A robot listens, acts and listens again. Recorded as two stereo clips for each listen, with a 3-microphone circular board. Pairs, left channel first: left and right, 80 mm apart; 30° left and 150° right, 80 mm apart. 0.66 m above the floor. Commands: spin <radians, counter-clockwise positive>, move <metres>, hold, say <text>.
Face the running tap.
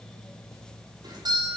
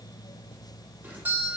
hold
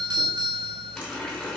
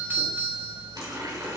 spin 3.05
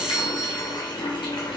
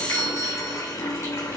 spin 1.48
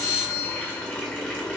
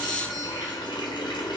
spin 0.26
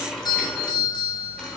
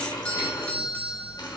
say Facing the running tap.